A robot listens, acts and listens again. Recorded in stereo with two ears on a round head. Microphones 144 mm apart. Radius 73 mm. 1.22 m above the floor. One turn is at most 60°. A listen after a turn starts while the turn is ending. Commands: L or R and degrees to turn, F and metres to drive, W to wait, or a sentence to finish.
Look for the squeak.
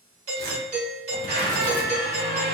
R60
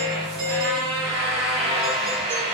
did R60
R35
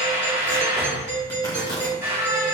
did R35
R15
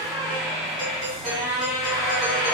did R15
Facing the squeak, 1 to 2 m away.